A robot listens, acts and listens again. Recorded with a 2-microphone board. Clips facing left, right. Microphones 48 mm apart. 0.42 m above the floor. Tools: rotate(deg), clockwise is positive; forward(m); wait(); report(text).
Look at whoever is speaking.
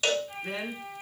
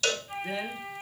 rotate(-55)
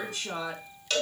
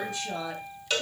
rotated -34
rotate(-85)
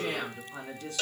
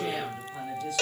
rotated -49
rotate(-35)
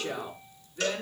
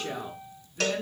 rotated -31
report("Facing the woman speaking.")